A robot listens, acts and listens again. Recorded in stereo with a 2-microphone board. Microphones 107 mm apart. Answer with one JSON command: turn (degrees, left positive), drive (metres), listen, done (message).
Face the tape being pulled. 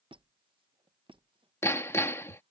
{"listen": true}
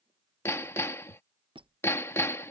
{"listen": true}
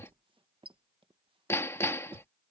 {"done": "I can't make out tape being pulled to turn to."}